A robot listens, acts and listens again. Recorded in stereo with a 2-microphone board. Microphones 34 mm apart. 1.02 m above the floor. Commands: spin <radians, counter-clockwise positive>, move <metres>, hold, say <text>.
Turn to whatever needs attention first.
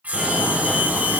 spin 0.52
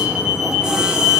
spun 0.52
spin -0.35
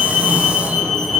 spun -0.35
say Facing the fire alarm, over 4 m away.